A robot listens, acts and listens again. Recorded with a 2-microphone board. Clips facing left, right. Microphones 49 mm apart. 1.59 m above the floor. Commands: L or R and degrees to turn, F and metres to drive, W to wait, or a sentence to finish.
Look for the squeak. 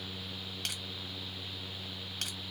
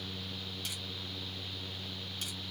W
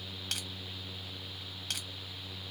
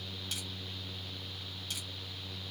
W
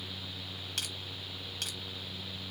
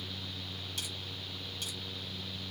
I can't make out a squeak.